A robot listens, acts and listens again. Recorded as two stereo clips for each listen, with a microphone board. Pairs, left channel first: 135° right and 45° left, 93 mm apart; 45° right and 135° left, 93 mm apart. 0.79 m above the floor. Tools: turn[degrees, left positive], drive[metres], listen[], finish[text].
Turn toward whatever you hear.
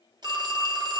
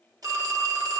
Thought: The phone ringing: 85° left.
Action: turn[85]
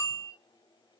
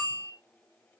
Thought: The phone ringing is now 20° left.
Action: turn[20]
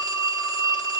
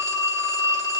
Action: finish[Facing the phone ringing, under 1 m away.]